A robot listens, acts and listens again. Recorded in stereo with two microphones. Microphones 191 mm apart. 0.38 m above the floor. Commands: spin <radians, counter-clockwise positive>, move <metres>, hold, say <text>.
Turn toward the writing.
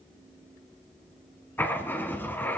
spin 0.52
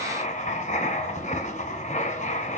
spin 2.44
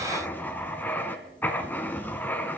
spin 0.17
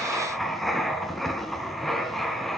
say Found it: writing, straight ahead.